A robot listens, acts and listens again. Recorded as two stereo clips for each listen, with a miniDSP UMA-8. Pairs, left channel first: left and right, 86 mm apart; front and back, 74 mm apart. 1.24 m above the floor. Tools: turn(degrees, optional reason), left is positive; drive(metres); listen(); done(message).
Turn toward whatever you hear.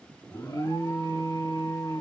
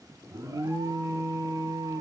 turn(degrees=140, reason="The alarm: 140° left.")
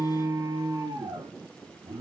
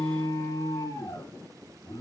turn(degrees=-40, reason="The alarm is now 40° right.")
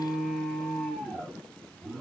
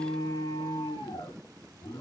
done("Found it: an alarm, straight ahead.")